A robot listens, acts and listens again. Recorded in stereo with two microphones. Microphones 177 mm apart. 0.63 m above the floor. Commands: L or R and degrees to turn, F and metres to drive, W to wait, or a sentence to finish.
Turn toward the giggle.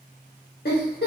L60
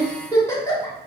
L20
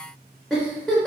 Facing the giggle, under 1 m away.